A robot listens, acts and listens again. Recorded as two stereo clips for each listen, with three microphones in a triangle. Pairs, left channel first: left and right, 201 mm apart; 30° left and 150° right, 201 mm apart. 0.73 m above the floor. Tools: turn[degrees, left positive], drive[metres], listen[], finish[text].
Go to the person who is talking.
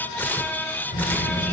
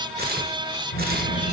Thought: The child speaking: 50° left.
Action: turn[50]
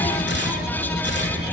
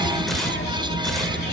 Action: drive[1.0]
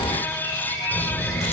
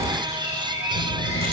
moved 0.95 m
Action: drive[1.0]
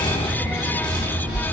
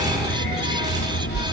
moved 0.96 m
Action: drive[1.0]
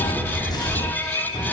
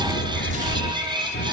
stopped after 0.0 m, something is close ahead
Action: finish[Arrived at the child speaking, straight ahead.]